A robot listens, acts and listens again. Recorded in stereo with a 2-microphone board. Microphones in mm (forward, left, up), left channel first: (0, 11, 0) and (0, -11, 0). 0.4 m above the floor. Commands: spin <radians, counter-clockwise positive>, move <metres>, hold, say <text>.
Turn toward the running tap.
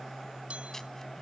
hold
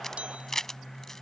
hold
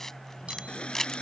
spin 1.05
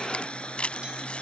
spin 1.05
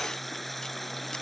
say Facing the running tap.